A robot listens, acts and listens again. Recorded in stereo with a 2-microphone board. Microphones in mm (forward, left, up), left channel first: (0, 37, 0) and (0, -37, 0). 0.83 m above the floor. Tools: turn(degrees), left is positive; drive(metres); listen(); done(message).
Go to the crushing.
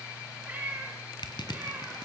turn(degrees=90)
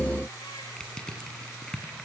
turn(degrees=10)
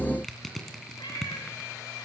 drive(metres=1.0)
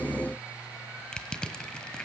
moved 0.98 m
turn(degrees=10)
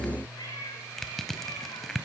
drive(metres=1.0)
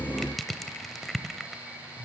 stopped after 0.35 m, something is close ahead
done("Arrived at the crushing, straight ahead.")